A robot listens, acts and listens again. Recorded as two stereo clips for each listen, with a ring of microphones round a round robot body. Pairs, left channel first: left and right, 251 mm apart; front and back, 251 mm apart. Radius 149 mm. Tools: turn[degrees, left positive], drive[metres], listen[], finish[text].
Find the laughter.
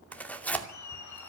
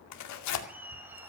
Thought: The laughter: 95° left.
Action: turn[95]
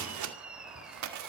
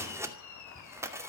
Action: finish[Facing the laughter, over 4 m away.]